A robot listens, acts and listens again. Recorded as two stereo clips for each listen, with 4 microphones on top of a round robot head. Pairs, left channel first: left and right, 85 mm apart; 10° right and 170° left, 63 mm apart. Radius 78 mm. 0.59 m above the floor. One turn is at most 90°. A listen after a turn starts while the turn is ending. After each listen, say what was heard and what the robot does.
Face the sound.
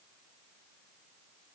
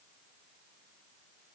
Keep listening.
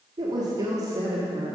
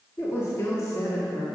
The woman speaking: 35° right. Turn 35° right.
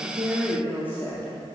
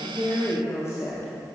The woman speaking is now 30° left. Turn 30° left.
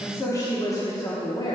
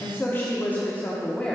The woman speaking is now 60° left. Turn 60° left.
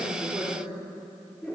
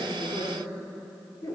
The woman speaking is now 10° left. Turn 10° left.
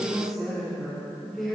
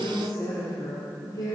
Found it: a woman speaking, straight ahead.